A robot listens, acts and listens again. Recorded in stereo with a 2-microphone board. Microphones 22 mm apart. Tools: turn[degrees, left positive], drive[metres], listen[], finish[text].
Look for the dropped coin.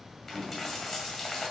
Action: turn[30]
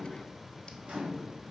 Action: listen[]
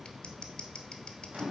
Action: finish[I heard a dropped coin, but can't make it out now. It was about 20° right or 140° left.]